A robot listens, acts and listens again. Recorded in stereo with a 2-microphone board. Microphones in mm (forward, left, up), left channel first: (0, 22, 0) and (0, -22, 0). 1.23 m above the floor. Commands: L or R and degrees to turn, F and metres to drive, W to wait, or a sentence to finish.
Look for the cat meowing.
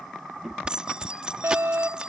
R30
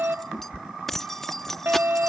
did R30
R140
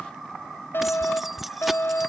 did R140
L40
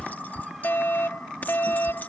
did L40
R10
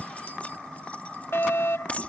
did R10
Found it: a cat meowing, straight ahead.